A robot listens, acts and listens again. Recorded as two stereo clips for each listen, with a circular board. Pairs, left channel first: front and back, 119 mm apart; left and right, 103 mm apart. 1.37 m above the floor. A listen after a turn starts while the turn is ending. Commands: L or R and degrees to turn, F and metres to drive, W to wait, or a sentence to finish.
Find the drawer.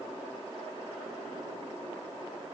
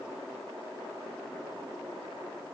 W
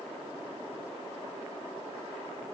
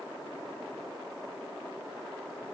W
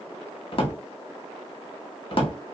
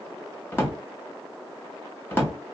L25
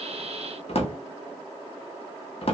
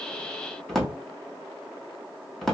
Facing the drawer, 1 to 2 m away.